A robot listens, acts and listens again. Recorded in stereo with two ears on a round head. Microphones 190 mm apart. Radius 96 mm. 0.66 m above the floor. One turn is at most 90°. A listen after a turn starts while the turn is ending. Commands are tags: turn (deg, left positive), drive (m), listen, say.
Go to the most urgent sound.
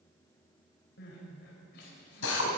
<turn deg="55"/>
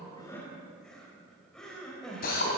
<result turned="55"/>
<drive m="1.0"/>
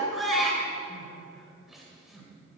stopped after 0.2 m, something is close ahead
<say>Blocked. The crying is further on, straight ahead.</say>